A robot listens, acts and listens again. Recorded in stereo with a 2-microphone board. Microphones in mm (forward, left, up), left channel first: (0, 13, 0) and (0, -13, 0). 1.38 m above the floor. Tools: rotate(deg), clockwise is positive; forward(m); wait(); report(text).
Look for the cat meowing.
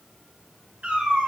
rotate(55)
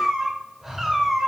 report("Found it: a cat meowing, straight ahead.")